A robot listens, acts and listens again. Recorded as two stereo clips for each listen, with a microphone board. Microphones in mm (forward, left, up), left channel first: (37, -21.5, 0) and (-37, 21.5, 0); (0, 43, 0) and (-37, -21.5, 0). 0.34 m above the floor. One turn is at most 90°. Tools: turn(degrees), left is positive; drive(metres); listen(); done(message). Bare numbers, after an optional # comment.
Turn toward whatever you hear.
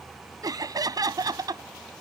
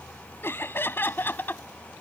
# The laughter: 120° left.
turn(90)
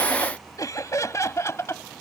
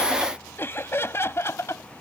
# The laughter is now 20° left.
turn(20)
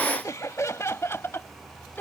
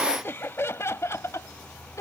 # The laughter is now 30° left.
turn(30)
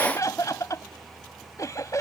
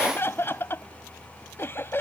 # The laughter is now 10° left.
turn(10)
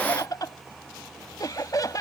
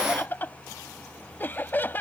done("Facing the laughter.")